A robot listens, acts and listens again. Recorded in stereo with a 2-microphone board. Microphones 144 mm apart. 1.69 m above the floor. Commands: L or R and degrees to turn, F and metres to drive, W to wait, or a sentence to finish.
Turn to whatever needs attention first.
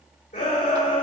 L70
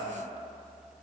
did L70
L45
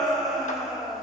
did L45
Found it: a shout, straight ahead, 2 to 4 m away.